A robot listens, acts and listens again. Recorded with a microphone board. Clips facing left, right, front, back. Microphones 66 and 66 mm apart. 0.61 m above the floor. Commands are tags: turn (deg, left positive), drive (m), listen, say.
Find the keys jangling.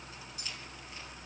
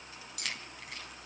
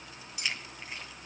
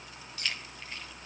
<turn deg="-75"/>
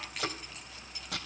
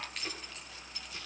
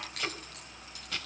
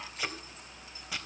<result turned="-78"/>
<listen/>
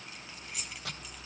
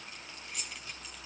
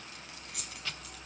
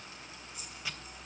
<say>Facing the keys jangling, 2 to 4 m away.</say>